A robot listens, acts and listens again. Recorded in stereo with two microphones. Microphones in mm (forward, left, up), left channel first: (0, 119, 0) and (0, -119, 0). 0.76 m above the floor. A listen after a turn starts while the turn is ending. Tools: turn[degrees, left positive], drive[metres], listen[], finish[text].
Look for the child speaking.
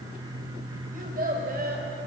Thought: The child speaking: about 40° right or 140° right.
Action: turn[-40]
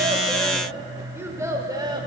Thought: So it is at 15° right.
Action: turn[-15]
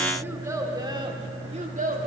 Thought: The child speaking is now 35° right.
Action: turn[-35]
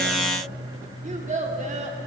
Thought: The child speaking is now 30° right.
Action: turn[-30]
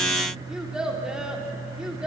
Action: finish[Found it: a child speaking, straight ahead, 1 to 2 m away.]